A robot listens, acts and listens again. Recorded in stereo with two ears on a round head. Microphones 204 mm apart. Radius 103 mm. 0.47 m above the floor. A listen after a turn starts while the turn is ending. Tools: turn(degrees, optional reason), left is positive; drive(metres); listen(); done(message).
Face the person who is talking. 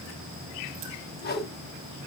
listen()
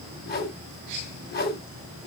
listen()
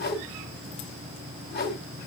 done("I can't make out anyone speaking to turn to.")